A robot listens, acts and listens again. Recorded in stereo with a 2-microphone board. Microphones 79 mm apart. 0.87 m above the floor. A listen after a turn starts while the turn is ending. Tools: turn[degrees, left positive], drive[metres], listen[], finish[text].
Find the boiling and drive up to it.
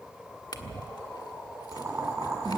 Thought: The boiling: about 45° right or 135° right.
Action: turn[-45]
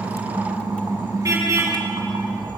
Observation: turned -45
Action: listen[]
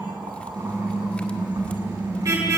Action: listen[]
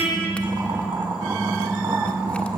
Thought: So it is at 90° right.
Action: turn[-90]
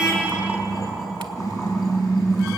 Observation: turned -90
Action: listen[]
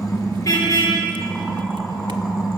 Action: listen[]
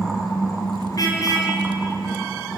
Action: finish[Facing where the boiling came from. I can't hear it now. I did not reach it.]